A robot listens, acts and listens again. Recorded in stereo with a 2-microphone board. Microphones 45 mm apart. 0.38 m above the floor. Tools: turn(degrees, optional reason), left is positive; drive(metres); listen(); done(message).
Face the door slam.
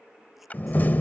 turn(degrees=45, reason="The door slam: about 45° left or 135° left.")
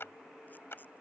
listen()
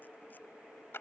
done("I heard a door slam, but can't make it out now. It was about straight ahead or 90° left.")